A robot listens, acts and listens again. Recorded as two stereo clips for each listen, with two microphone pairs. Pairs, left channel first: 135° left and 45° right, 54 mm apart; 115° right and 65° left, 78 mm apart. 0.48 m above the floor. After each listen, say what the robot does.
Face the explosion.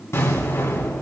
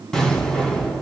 Turn 165° left.
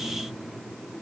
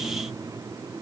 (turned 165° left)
Facing where the explosion came from. I can't hear it now.